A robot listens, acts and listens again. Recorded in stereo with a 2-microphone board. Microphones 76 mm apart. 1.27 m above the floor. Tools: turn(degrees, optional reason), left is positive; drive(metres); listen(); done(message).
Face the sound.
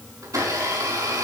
turn(degrees=-45, reason="The blender: about 45° right or 135° right.")
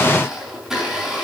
done("Found it: a blender, straight ahead.")